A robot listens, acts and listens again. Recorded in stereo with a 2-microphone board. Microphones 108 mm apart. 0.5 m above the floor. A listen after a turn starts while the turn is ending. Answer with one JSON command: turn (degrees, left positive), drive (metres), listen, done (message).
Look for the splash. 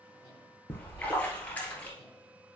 {"turn": 30}
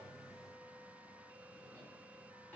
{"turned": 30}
{"listen": true}
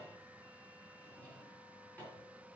{"done": "I heard a splash, but can't make it out now. It was about 15° right or 135° left."}